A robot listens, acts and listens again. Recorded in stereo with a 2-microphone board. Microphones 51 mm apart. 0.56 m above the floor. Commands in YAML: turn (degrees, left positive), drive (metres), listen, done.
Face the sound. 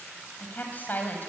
turn: 35
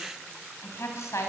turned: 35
turn: 110
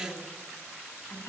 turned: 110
turn: 50
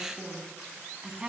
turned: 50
turn: -15
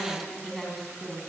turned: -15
done: "Found it: a woman speaking, straight ahead."